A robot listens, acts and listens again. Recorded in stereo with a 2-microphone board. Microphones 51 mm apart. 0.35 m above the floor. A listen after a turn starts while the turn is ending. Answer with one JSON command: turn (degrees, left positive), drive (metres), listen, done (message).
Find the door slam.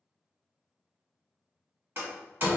{"turn": -45}
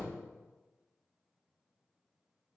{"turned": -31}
{"listen": true}
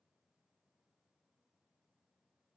{"done": "I heard a door slam, but can't make it out now. It was about 15° right or 105° right."}